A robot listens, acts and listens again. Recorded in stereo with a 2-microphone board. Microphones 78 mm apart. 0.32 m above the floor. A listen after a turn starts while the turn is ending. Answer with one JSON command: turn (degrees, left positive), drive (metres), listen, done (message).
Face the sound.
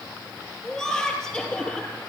{"turn": 30}
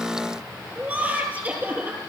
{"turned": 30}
{"turn": -20}
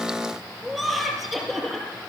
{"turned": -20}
{"done": "Facing the laughter."}